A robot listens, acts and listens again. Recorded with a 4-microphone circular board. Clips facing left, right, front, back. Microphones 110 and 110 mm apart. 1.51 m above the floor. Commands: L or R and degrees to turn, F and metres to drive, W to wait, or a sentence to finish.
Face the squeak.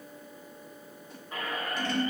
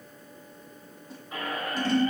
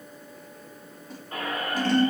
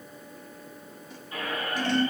Facing the squeak, 2 to 4 m away.